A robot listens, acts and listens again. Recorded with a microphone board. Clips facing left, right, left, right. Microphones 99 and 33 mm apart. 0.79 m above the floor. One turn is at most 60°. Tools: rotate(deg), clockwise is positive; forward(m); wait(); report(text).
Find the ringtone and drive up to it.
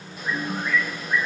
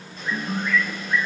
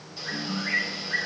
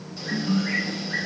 rotate(30)
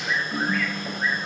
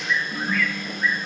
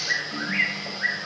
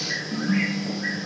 forward(1.0)
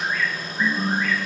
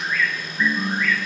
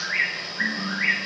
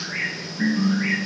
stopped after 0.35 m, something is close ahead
report("Something is in my way. I am facing the ringtone but have not reached it.")